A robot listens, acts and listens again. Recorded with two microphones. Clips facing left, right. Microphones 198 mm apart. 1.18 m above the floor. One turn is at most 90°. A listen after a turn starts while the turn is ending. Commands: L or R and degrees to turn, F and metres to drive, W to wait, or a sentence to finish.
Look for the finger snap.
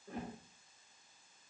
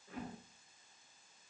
W
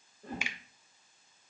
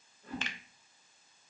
L30
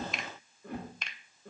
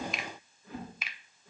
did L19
Found it: a finger snap, straight ahead.